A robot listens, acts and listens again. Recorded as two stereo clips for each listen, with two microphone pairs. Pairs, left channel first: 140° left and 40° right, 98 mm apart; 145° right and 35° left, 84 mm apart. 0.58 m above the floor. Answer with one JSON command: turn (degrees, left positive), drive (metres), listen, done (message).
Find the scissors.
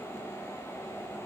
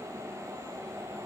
{"listen": true}
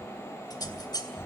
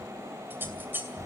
{"turn": 100}
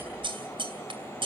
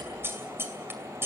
{"turn": -25}
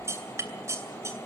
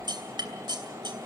{"turn": 15}
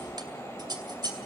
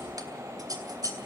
{"done": "Facing the scissors."}